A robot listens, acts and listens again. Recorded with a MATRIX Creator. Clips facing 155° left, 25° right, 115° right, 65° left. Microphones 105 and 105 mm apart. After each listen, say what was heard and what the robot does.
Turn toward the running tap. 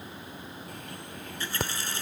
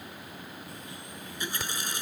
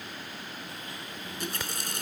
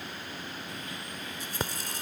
The running tap: 95° right. Turn 95° right.
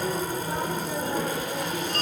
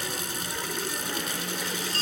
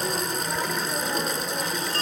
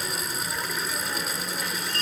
Keep listening.
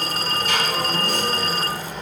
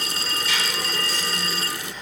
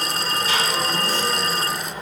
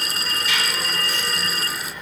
Keep listening.
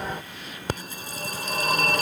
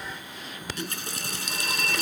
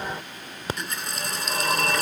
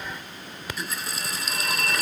The running tap is now 20° right. Turn 20° right.
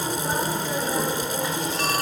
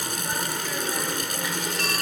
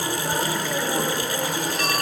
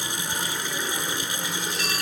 Keep listening.
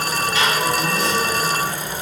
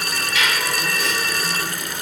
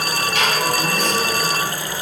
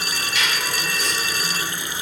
Keep listening.
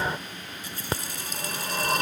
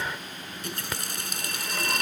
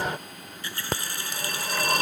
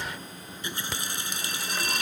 Facing the running tap.